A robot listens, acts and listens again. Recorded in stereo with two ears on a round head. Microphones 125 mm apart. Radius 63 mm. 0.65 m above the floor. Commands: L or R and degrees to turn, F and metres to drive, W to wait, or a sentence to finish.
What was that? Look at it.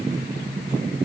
W
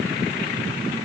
W
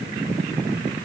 I can't make out anything.